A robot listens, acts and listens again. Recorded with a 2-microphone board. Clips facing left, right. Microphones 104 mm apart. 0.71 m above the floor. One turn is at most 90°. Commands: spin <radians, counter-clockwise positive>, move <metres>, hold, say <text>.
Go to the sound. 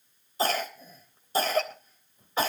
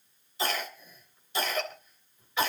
spin 0.70
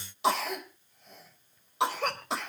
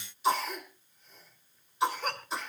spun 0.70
spin 1.57
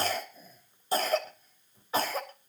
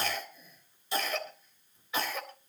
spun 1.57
spin 0.70
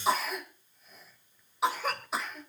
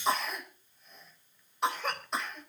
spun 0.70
move 1.0
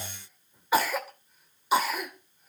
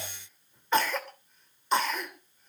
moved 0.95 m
spin 0.17
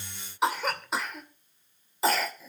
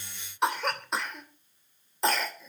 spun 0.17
move 1.0
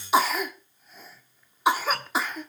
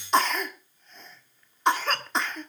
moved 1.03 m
spin 0.17
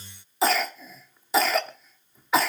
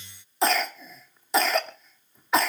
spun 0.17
move 1.0
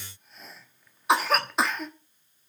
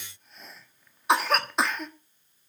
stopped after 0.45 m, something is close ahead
say I am next to the cough.